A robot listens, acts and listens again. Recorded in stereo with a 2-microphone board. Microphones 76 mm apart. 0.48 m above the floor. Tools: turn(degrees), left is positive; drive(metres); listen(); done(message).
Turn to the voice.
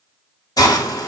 listen()
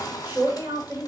turn(degrees=-25)
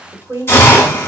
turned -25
turn(degrees=-125)
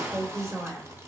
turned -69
turn(degrees=-55)
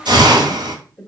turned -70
turn(degrees=15)
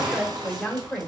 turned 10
done("Found it: a man speaking, straight ahead, 1 to 2 m away.")